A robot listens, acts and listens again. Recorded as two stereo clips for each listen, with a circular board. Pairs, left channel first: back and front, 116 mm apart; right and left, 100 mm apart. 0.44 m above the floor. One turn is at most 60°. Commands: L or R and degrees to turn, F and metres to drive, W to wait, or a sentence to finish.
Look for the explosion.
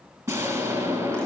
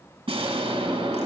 L60
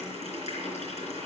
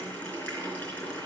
Facing where the explosion came from. I can't hear it now.